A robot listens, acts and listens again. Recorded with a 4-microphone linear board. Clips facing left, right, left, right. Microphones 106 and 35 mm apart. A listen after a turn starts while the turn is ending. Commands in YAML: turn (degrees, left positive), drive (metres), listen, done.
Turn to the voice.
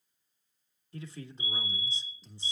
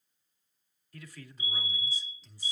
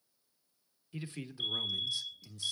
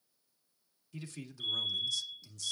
turn: 25
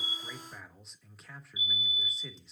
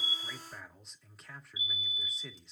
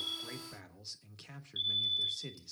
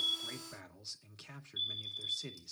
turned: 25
done: "Facing the man speaking."